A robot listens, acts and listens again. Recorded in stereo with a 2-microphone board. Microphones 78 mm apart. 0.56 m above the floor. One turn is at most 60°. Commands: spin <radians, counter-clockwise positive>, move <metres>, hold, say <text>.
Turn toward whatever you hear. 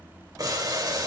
spin -0.87
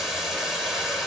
say Facing the boiling.